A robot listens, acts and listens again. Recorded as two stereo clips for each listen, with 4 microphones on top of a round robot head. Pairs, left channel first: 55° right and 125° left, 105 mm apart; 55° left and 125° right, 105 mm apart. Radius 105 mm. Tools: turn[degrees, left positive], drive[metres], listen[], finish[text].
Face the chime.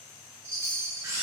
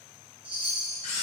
Thought: The chime: 170° right.
Action: turn[-170]
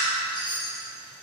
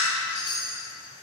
Action: finish[Found it: a chime, straight ahead.]